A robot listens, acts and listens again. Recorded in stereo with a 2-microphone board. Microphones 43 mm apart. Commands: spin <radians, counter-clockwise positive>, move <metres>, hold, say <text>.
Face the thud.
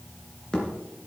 spin 0.26
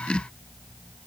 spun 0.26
hold
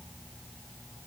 say I heard a thud, but can't make it out now. It was about straight ahead or 150° left.